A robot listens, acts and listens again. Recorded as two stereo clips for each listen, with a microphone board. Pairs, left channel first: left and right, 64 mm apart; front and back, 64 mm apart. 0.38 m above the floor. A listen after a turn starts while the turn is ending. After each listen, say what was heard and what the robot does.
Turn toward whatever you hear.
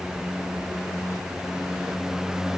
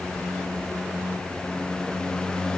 Keep listening.
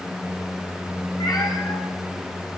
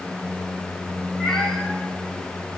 The cat meowing: 85° left. Turn 85° left.
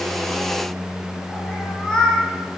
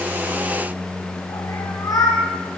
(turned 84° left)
The cat meowing is now 10° left. Turn 10° left.
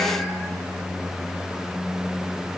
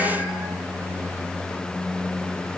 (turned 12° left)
Keep listening.
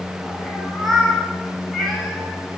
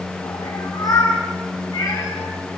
Facing the cat meowing.